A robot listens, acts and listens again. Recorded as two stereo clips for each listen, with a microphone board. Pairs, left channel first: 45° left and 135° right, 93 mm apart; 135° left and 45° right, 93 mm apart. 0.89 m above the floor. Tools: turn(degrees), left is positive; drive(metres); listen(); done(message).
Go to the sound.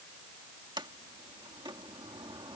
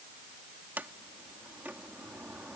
turn(degrees=-115)
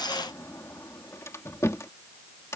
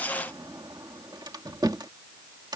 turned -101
turn(degrees=-10)
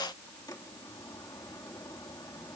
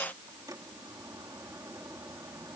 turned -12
listen()
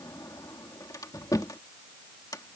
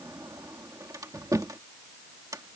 drive(metres=1.0)
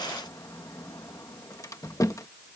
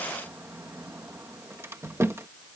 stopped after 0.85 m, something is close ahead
done("Arrived at the sliding door, straight ahead.")